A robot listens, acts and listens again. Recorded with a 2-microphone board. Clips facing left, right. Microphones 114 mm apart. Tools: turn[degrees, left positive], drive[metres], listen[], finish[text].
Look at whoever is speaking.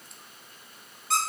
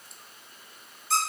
Action: listen[]
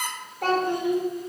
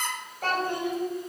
Thought: The child speaking: about 70° left or 110° left.
Action: turn[70]
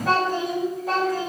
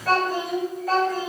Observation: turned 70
Thought: So it is at 20° left.
Action: turn[20]
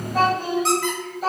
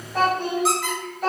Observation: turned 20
Action: finish[Found it: a child speaking, straight ahead.]